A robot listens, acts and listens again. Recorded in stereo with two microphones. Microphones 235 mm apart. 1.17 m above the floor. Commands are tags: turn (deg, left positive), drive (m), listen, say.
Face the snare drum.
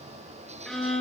<listen/>
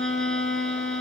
<listen/>
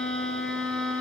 <say>I can't make out a snare drum to turn to.</say>